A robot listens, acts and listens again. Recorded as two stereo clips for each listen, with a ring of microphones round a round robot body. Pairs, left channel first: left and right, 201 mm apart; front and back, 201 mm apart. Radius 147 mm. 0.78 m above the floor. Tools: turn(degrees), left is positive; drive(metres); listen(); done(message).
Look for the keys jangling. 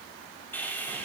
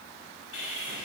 listen()
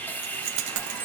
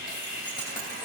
turn(degrees=-75)
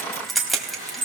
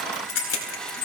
done("Found it: keys jangling, straight ahead.")